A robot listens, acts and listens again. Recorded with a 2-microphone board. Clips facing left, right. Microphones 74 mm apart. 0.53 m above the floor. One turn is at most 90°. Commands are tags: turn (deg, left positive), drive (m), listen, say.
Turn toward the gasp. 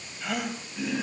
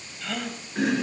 <turn deg="30"/>
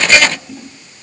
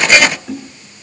<listen/>
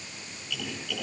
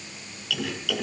<say>I heard a gasp, but can't make it out now. It was about 20° right or 140° left.</say>